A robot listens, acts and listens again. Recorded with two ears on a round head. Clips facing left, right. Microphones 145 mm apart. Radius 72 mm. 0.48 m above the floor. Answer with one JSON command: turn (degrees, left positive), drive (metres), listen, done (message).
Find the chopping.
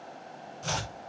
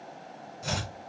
{"turn": -15}
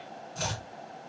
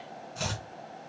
{"done": "Facing the chopping, 1 to 2 m away."}